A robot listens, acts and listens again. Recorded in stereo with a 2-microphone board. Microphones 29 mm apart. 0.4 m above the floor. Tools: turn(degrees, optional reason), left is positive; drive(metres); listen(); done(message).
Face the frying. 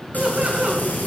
turn(degrees=90)
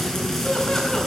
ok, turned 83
turn(degrees=15, reason="So it is at 15° left.")
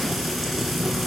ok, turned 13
done("Found it: frying, straight ahead.")